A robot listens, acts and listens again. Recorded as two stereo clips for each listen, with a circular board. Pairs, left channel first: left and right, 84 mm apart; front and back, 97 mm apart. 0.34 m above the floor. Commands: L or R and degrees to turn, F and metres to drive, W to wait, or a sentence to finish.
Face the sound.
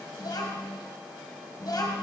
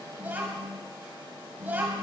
L115
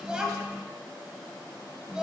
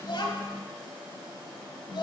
R10
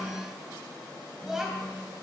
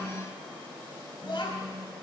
Found it: a child speaking, straight ahead, 1 to 2 m away.